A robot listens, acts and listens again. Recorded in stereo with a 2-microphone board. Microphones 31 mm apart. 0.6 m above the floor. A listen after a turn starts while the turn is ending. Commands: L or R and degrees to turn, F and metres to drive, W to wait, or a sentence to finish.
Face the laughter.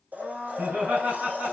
R75
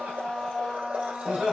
Facing the laughter.